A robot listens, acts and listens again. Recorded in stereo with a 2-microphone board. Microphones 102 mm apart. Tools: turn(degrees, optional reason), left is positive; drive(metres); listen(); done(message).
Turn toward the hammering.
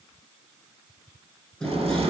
turn(degrees=30)
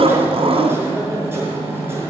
turn(degrees=-25, reason="So it is at 25° right.")
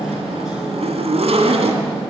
done("Facing the hammering.")